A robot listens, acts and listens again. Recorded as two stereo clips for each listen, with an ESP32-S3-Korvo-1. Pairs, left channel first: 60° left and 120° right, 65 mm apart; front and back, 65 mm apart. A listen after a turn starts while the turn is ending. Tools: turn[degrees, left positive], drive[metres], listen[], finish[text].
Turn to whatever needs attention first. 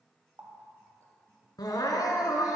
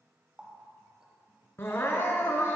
Thought: The crying: 55° left.
Action: turn[55]
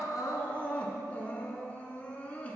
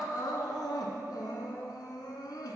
Action: finish[Facing the crying.]